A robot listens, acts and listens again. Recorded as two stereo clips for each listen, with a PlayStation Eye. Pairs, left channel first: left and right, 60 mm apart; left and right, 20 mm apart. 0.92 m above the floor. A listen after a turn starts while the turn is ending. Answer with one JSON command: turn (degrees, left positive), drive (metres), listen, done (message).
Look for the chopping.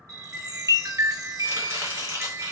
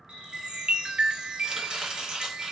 {"turn": -45}
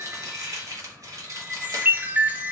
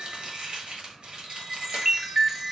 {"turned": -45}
{"turn": -85}
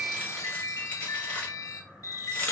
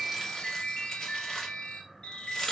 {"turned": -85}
{"turn": 20}
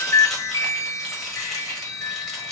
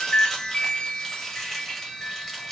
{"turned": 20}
{"done": "Found it: chopping, straight ahead, 1 to 2 m away."}